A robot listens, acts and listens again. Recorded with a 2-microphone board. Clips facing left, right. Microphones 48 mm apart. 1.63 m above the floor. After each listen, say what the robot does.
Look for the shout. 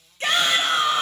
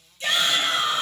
Turn 50° left.
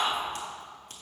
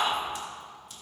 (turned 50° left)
Found it: a shout, straight ahead, 1 to 2 m away.